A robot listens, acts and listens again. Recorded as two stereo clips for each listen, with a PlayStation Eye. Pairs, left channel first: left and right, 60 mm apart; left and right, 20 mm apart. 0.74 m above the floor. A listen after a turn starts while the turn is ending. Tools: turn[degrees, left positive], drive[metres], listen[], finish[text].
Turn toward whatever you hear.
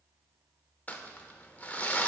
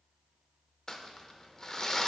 Thought: The crumpling: about 25° left or 155° left.
Action: turn[25]
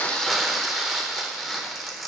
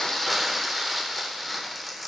Action: finish[Facing the crumpling, under 1 m away.]